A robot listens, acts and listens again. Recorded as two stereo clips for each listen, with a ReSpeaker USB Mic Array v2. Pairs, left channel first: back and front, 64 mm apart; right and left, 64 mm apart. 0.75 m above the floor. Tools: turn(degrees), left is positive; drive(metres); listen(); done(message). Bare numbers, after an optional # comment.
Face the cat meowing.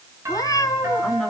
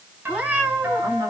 # The cat meowing: 155° left.
turn(155)
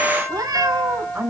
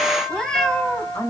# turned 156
# The cat meowing is now 10° right.
turn(-10)
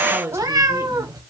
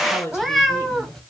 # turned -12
done("Facing the cat meowing.")